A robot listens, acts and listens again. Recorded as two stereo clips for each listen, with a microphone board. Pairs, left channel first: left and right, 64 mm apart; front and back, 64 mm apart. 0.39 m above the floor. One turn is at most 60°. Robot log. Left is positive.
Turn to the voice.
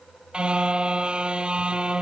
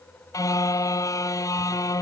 cmd idle
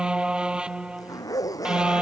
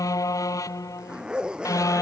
cmd idle
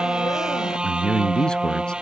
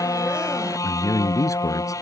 note: The man speaking: 15° left.
cmd yaw +15
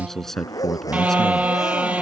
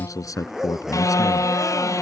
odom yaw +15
end: Found it: a man speaking, straight ahead.